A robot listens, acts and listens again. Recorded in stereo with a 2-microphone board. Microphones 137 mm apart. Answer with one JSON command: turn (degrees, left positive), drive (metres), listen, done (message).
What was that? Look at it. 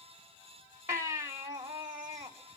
{"turn": -15}
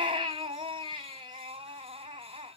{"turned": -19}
{"turn": -145}
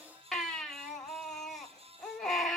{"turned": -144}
{"done": "Found it: a baby crying, straight ahead, 1 to 2 m away."}